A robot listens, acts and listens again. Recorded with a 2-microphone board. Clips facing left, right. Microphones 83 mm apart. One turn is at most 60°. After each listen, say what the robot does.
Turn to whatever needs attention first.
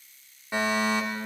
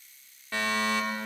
Turn 20° left.
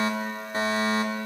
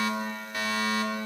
Turn 60° left.
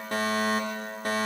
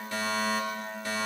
Turn 60° left.
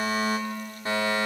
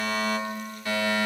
Turn 40° left.
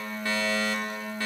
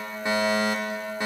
Turn 25° right.
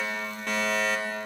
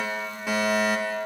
Found it: a fire alarm, straight ahead.